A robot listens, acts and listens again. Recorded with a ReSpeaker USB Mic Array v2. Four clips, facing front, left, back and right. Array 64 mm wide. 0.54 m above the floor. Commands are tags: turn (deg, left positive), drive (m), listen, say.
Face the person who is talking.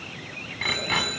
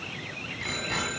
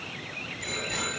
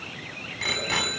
<listen/>
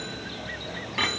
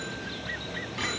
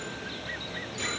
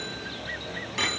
<listen/>
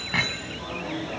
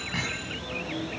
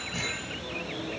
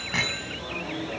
<say>I can't make out anyone speaking, only a bicycle bell.</say>